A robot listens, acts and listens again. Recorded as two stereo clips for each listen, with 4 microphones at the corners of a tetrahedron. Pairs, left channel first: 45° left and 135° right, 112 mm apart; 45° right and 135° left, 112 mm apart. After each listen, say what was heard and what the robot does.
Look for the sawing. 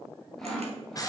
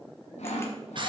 The sawing: 40° right. Turn 40° right.
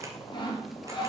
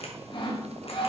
Found it: sawing, straight ahead.